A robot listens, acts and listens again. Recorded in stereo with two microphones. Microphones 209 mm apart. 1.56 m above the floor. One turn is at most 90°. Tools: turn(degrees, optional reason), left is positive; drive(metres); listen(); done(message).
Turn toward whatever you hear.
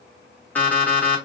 turn(degrees=30)
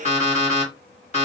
turn(degrees=90, reason="So it is at 145° left.")
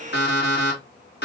turn(degrees=70, reason="The alarm clock is now 70° left.")
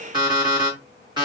turn(degrees=-25, reason="The alarm clock is now 25° right.")
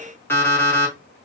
turn(degrees=10, reason="The alarm clock is now 10° left.")
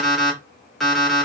done("Facing the alarm clock.")